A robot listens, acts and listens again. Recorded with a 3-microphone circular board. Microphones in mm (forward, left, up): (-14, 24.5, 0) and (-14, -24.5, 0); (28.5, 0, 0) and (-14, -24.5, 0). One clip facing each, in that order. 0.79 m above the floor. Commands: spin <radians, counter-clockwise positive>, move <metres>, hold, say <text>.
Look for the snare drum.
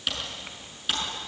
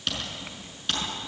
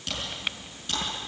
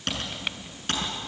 hold
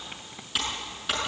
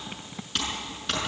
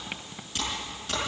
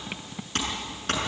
hold
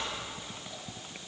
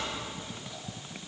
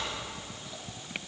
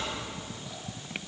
say I can't make out a snare drum, only typing on a keyboard.